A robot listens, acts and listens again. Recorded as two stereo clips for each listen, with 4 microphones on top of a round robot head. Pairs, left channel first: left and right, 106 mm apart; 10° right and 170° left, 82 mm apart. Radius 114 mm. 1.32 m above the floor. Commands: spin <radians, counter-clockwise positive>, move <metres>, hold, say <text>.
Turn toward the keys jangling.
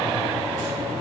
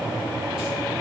hold
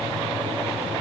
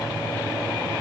hold
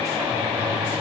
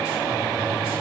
say I can't make out keys jangling.